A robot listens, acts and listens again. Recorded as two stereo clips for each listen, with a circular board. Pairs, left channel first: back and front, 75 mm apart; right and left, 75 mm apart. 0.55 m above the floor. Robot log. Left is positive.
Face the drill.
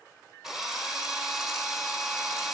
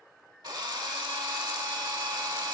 note: The drill: 85° left.
cmd yaw +85
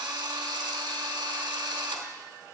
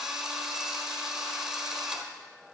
note: The drill is now 10° left.
cmd yaw +10
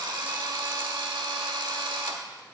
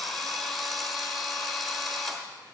end: Facing the drill, 1 to 2 m away.